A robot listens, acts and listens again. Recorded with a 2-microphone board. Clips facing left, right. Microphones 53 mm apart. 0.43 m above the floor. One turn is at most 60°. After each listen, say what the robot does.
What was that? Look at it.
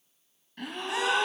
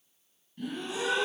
Turn 60° left.
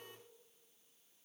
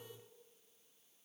Turn 30° left.
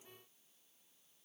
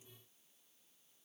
Facing where the gasp came from. I can't hear it now.